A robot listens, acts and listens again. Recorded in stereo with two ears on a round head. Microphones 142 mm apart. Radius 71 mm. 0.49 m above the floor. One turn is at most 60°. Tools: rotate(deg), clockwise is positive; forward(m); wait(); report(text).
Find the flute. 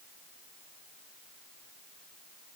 wait()
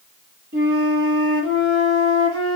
rotate(60)
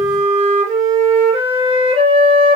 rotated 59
rotate(35)
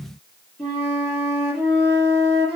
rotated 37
report("Facing the flute.")